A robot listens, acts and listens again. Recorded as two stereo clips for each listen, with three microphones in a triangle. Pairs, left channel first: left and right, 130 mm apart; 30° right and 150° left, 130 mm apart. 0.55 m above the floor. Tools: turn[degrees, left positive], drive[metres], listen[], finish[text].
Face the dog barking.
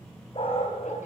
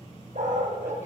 Thought: The dog barking: 135° left.
Action: turn[135]
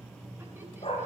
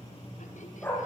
Thought: The dog barking is now 45° left.
Action: turn[45]
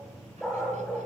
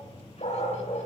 Action: finish[Found it: a dog barking, straight ahead.]